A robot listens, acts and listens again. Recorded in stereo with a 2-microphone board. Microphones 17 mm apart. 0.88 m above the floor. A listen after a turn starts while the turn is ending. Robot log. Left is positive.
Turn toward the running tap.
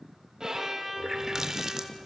note: The running tap: about 30° right or 150° right.
cmd yaw -30
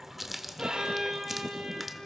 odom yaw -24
note: So it is at 10° right.
cmd yaw -10
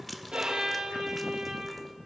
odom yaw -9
end: Facing the running tap, 1 to 2 m away.